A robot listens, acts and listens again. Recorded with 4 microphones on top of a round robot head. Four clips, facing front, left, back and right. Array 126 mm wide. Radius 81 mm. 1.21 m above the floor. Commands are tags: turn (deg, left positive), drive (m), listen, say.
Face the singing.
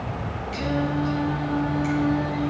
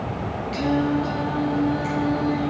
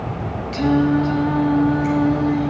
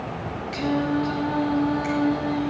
<turn deg="-145"/>
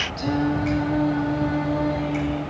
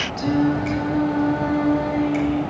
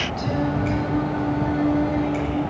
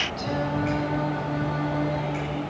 <turn deg="65"/>
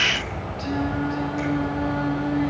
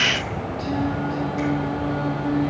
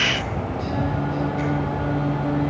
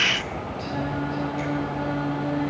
<say>Facing the singing, 2 to 4 m away.</say>